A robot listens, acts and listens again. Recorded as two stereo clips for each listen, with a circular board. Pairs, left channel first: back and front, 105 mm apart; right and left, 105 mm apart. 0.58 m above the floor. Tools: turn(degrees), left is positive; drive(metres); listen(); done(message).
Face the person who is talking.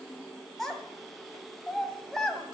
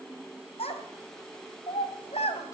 turn(degrees=-95)
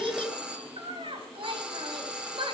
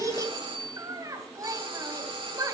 turn(degrees=35)
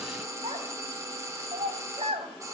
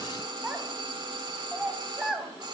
done("Facing the child speaking, 2 to 4 m away.")